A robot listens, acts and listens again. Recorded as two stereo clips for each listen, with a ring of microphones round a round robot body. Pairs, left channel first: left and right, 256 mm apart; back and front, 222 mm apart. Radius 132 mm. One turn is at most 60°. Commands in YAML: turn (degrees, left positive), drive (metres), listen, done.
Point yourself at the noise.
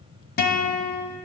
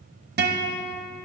turn: 40
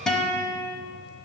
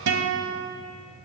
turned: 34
done: "Facing the guitar, 1 to 2 m away."